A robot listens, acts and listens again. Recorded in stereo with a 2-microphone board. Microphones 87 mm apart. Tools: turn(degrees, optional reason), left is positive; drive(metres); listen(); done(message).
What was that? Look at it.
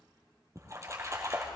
turn(degrees=-35, reason="The splash: about 35° right or 145° right.")
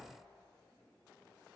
listen()
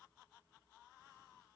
done("I heard a splash, but can't make it out now. It was about straight ahead or 110° right.")